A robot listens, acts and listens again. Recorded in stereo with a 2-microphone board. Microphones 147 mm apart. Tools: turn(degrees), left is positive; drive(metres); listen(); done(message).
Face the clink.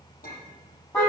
turn(degrees=75)
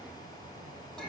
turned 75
done("Facing the clink.")